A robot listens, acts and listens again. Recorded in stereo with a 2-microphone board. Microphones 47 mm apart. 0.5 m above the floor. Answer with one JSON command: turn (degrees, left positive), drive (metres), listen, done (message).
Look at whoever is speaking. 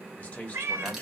{"turn": 35}
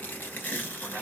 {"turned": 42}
{"listen": true}
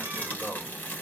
{"turn": 100}
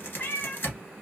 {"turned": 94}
{"listen": true}
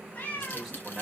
{"done": "Found it: a man speaking, straight ahead, 1 to 2 m away."}